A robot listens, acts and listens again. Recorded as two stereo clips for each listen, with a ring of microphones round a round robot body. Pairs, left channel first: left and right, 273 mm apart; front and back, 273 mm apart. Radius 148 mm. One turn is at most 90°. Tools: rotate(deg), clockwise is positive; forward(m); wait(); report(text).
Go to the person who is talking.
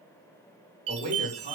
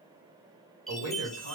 rotate(90)
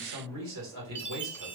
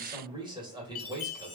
rotate(90)
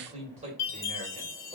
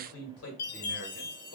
rotate(25)
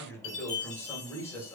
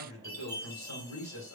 rotate(-10)
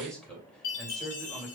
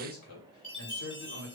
forward(1.0)
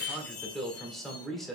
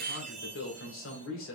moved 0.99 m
forward(1.0)
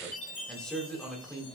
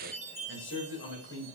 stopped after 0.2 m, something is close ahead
report("Arrived at the man speaking, straight ahead.")